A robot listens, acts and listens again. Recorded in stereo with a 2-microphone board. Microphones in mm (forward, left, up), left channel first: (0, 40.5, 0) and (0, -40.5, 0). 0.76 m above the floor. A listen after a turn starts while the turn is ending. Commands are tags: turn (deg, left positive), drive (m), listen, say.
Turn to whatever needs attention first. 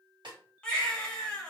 <turn deg="30"/>
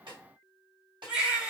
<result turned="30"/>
<turn deg="-15"/>
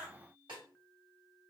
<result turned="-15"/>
<listen/>
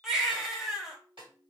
<say>Found it: a baby crying, straight ahead, under 1 m away.</say>